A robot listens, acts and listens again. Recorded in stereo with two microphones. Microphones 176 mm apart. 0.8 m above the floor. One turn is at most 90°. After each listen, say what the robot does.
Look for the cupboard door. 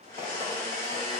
Keep listening.
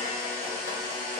Keep listening.
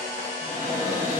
Turn 70° right.
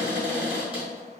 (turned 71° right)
Turn 10° right.
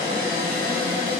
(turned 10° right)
Found it: a cupboard door, straight ahead.